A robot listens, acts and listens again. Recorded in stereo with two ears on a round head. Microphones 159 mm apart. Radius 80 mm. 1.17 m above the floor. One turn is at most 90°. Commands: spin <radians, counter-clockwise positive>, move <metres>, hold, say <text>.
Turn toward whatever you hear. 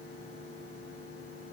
hold
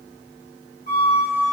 spin 0.79
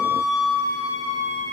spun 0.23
spin 1.57
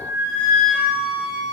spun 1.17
spin 0.96
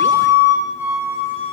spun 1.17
spin -0.17
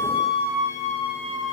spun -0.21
say Found it: a flute, straight ahead, 1 to 2 m away.